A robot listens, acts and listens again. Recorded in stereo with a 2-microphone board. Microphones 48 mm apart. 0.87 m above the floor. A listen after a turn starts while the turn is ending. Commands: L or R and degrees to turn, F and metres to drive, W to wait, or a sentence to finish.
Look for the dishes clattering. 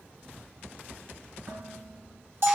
R90
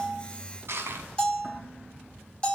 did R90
W
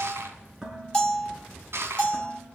R15
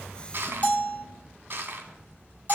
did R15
W
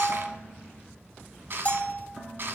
Facing the dishes clattering.